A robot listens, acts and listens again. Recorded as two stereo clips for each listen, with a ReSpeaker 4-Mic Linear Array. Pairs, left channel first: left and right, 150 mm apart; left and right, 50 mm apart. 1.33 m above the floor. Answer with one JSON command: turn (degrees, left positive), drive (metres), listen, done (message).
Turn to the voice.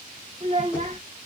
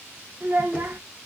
{"turn": -45}
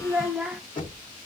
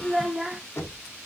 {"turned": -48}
{"done": "Facing the child speaking."}